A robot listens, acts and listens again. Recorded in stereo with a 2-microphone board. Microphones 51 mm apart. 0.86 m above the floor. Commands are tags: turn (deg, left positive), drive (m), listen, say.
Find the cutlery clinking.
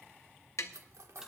<turn deg="-90"/>
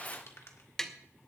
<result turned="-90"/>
<listen/>
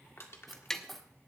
<say>Facing the cutlery clinking.</say>